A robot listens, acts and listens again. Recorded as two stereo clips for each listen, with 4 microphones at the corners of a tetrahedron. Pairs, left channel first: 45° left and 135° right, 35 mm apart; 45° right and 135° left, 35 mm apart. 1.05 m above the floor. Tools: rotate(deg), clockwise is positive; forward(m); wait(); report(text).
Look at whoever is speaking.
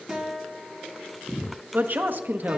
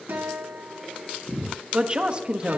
rotate(165)
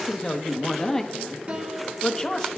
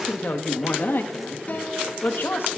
rotate(30)
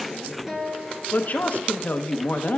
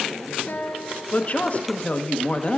report("Facing the woman speaking, 1 to 2 m away.")